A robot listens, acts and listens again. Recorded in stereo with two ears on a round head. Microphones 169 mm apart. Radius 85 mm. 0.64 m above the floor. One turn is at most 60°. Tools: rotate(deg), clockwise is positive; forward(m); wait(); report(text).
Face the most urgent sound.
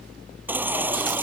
rotate(30)
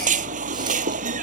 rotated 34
rotate(60)
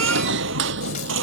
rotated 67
rotate(60)
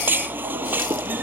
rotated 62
rotate(10)
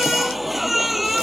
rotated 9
report("Facing the baby crying.")